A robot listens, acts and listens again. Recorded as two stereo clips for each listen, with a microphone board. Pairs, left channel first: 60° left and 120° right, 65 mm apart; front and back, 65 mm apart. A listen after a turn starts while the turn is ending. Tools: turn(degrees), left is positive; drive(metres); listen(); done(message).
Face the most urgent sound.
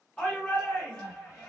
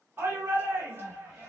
turn(degrees=130)
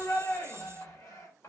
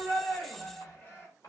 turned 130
turn(degrees=55)
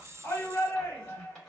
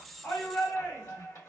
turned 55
turn(degrees=15)
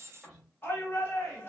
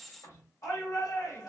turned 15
done("Facing the shout, 1 to 2 m away.")